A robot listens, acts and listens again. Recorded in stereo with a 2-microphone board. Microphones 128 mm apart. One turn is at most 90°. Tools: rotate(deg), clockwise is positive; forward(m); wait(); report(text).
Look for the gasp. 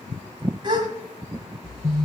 rotate(40)
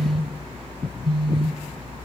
wait()
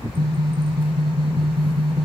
report("I heard a gasp, but can't make it out now. It was about straight ahead or 100° right.")